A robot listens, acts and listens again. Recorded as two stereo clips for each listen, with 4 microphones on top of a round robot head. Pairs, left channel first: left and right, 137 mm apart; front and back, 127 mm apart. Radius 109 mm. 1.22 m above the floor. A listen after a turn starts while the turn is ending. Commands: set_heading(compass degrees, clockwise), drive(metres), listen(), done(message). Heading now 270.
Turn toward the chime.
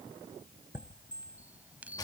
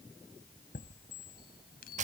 set_heading(280)
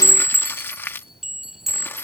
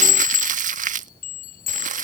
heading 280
done("Found it: a chime, straight ahead.")